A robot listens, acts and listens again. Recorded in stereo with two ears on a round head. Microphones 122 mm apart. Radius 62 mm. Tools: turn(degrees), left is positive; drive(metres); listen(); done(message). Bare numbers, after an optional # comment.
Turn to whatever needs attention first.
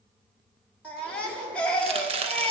turn(30)
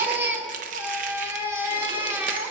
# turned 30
# So it is at 20° right.
turn(-20)
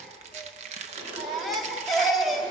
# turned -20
done("Facing the baby crying, 1 to 2 m away.")